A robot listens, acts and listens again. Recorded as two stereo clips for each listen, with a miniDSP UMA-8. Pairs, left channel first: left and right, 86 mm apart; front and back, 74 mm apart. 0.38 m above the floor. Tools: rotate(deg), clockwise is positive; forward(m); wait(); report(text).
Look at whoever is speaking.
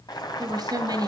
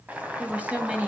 rotate(110)
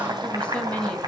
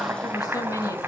rotate(-15)
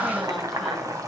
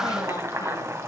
wait()
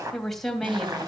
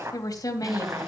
report("Facing the woman speaking.")